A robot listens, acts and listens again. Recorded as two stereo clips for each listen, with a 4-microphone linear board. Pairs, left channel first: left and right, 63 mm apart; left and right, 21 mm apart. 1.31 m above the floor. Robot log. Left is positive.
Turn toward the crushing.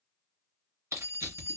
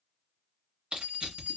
note: The crushing: about 50° right or 130° right.
cmd yaw -50
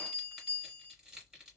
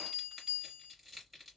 note: So it is at 10° right.
cmd yaw -10
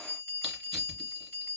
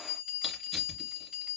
cmd idle
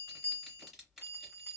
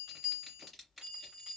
cmd idle
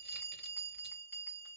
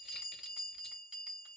end: I heard crushing from this way, but can't make it out now.